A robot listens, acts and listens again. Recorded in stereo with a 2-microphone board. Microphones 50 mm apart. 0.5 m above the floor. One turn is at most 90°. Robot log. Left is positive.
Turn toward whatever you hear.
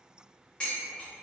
note: The dishes clattering: about 20° left or 160° left.
cmd yaw +20
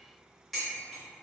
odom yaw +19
end: Facing the dishes clattering.